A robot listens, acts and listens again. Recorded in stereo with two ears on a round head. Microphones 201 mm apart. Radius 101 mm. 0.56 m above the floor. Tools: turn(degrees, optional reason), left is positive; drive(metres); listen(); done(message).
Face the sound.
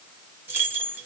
turn(degrees=-30)
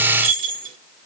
turn(degrees=-140, reason="So it is at 140° right.")
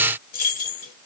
turn(degrees=40, reason="The keys jangling is now 40° left.")
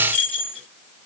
done("Facing the keys jangling, 1 to 2 m away.")